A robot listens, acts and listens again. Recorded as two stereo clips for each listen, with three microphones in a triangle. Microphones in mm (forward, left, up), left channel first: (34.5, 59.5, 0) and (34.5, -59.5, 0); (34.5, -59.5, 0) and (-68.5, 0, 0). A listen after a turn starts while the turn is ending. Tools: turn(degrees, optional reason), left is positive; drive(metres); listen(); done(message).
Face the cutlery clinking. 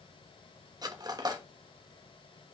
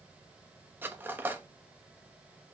turn(degrees=-140, reason="The cutlery clinking: 140° right.")
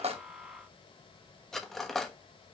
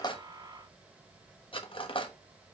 done("Found it: cutlery clinking, straight ahead.")